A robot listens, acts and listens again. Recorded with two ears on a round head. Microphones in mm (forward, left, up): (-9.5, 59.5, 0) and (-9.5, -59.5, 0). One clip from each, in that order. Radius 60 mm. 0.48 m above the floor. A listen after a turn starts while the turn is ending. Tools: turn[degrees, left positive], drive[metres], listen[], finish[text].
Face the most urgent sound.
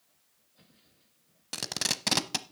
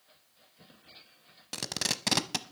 Action: listen[]
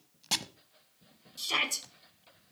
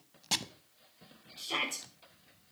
Thought: The shout: about 40° left or 140° left.
Action: turn[40]
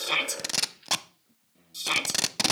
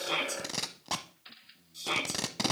Thought: So it is at 90° left.
Action: turn[90]
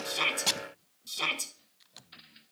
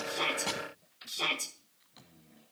Thought: The shout is now 25° left.
Action: turn[25]
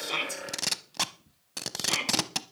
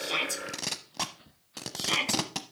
Thought: The shout is now 10° right.
Action: turn[-10]
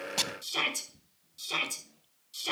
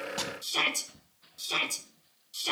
Action: finish[Facing the shout, 2 to 4 m away.]